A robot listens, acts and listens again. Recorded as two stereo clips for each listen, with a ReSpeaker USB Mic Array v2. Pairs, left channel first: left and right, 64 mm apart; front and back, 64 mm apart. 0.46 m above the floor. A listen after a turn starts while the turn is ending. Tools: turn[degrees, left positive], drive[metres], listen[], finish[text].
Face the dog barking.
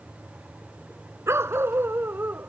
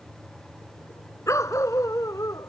Thought: The dog barking: 30° right.
Action: turn[-30]
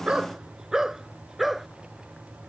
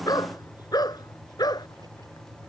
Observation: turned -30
Action: finish[Found it: a dog barking, straight ahead.]